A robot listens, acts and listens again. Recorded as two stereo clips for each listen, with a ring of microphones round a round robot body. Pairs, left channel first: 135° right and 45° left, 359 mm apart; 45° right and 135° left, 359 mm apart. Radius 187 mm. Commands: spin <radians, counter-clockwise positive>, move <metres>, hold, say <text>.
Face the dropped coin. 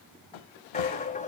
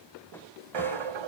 spin 2.71
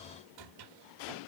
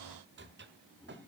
say Facing where the dropped coin came from. I can't hear it now.